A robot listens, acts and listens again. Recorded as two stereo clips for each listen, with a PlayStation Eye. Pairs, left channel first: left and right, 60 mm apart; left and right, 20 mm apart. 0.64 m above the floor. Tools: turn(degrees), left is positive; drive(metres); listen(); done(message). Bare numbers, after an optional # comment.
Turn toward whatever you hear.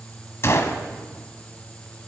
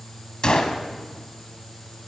# The gunshot: about 50° left or 130° left.
turn(50)
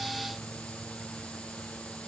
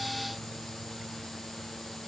listen()
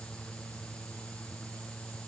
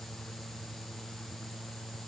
done("I heard a gunshot, but can't make it out now. It was about straight ahead or 80° left.")